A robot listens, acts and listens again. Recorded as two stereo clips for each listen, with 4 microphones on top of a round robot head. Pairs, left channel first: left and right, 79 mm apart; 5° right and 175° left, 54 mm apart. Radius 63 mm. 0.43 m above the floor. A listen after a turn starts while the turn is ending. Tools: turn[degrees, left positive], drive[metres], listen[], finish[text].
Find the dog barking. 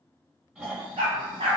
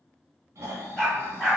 Thought: The dog barking: 85° right.
Action: turn[-85]
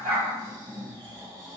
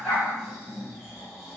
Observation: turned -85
Action: listen[]
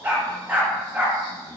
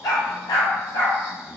Thought: The dog barking is now 15° right.
Action: turn[-15]
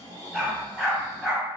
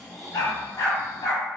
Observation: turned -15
Action: finish[Facing the dog barking, 1 to 2 m away.]